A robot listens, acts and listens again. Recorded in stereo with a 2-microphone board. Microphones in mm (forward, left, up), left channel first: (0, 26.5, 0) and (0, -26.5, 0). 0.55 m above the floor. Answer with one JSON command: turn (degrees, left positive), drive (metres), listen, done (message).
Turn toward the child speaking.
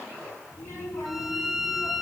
{"turn": 70}
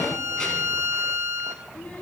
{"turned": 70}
{"turn": 25}
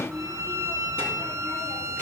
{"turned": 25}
{"turn": 20}
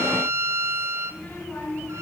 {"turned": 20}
{"turn": 25}
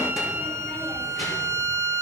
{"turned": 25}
{"listen": true}
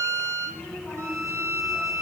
{"done": "Found it: a child speaking, straight ahead."}